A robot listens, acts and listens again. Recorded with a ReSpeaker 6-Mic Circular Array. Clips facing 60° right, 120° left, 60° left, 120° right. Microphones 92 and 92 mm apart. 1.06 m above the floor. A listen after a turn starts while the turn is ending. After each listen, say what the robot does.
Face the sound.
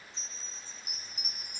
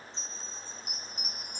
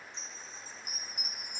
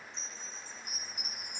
Turn 25° left.
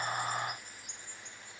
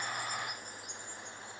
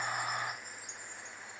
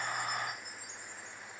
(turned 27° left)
Facing the chime.